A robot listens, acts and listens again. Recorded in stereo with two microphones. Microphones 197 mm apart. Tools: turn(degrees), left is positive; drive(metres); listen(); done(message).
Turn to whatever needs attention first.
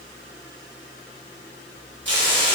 listen()
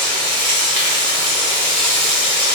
listen()
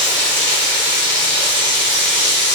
done("I can't make out anything urgent, only frying.")